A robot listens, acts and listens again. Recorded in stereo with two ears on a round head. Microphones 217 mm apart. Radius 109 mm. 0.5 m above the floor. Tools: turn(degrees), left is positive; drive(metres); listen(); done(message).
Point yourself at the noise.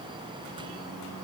listen()
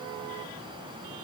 listen()
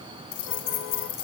turn(degrees=50)
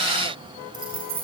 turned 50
turn(degrees=-25)
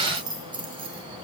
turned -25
turn(degrees=-20)
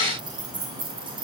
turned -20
turn(degrees=-20)
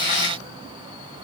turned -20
listen()
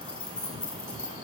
done("Facing the keys jangling, 2 to 4 m away.")